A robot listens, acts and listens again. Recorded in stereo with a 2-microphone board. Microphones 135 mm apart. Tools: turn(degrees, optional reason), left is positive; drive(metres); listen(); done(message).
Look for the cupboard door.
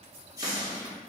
turn(degrees=-35, reason="The cupboard door: about 35° right or 145° right.")
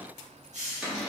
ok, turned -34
done("Found it: a cupboard door, straight ahead, 1 to 2 m away.")